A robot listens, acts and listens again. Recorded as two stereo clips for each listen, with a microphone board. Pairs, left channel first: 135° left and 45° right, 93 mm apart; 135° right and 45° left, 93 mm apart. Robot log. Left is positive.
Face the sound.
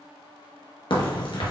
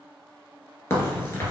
note: The crack: 165° left.
cmd yaw +165
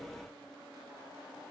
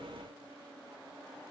end: I heard a crack from this way, but can't make it out now.